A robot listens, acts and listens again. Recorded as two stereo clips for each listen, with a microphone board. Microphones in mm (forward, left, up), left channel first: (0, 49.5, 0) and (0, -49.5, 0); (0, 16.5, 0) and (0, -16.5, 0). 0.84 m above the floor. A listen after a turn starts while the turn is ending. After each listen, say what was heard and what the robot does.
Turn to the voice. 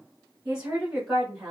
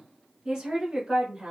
Turn 30° right.
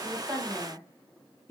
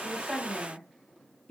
So it is at 30° left. Turn 30° left.
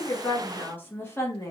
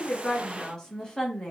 The woman speaking is now 30° left. Turn 30° left.
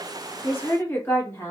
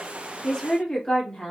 The woman speaking is now 30° left. Turn 30° left.
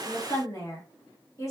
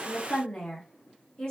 The woman speaking is now 30° left. Turn 30° left.
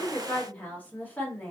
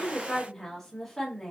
The woman speaking is now 15° left. Turn 15° left.
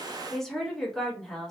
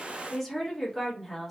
Facing the woman speaking.